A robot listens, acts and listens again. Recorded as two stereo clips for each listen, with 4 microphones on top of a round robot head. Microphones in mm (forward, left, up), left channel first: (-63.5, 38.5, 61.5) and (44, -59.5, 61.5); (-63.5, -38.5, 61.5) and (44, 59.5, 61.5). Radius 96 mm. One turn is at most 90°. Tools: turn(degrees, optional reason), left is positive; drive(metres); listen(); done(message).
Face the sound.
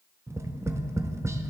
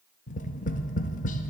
turn(degrees=-90, reason="The tapping: 115° right.")
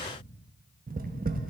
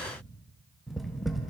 turn(degrees=-50, reason="The tapping is now 50° right.")
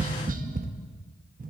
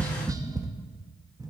turn(degrees=-25, reason="The tapping is now 25° right.")
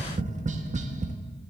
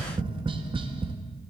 turn(degrees=-10, reason="The tapping is now 10° right.")
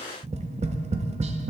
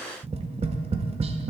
done("Facing the tapping, under 1 m away.")